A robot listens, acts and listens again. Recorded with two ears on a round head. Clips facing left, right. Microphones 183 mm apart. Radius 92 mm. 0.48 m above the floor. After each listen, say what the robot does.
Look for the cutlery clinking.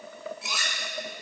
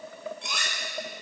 Turn 30° left.
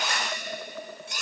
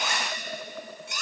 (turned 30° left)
Turn 145° left.
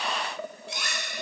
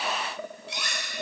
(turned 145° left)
Turn 45° left.
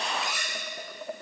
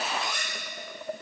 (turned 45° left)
Found it: cutlery clinking, straight ahead, 1 to 2 m away.